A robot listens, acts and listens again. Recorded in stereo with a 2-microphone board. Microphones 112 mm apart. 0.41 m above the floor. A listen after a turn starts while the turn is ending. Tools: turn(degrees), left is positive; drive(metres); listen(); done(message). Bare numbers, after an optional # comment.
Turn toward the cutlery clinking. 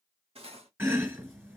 # The cutlery clinking: about 60° right or 120° right.
turn(-60)
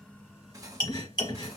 # So it is at 40° right.
turn(-40)
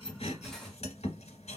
done("Facing the cutlery clinking, under 1 m away.")